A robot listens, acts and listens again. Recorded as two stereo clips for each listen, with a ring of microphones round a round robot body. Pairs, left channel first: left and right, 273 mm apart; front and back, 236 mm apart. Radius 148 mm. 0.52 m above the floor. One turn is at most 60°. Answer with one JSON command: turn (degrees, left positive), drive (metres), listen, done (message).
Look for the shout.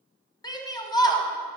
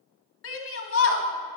{"turn": 15}
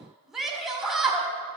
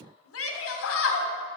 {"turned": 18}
{"done": "Facing the shout."}